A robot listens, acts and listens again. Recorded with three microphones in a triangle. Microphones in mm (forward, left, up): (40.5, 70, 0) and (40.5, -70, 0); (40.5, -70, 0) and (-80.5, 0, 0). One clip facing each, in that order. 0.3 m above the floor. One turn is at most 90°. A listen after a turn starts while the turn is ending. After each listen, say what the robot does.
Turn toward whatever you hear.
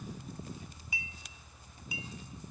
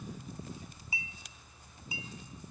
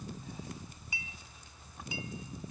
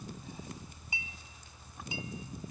Turn 90° right.
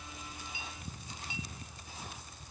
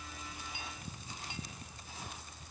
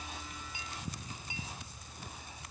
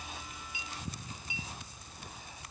Turn 70° right.
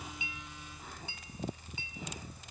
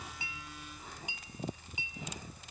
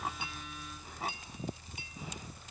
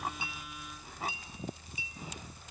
Turn 15° right.
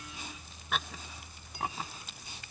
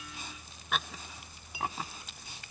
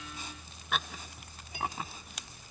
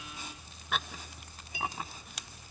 Keep listening.
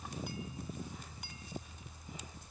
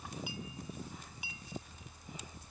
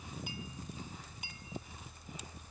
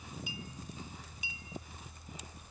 Found it: a clink, straight ahead.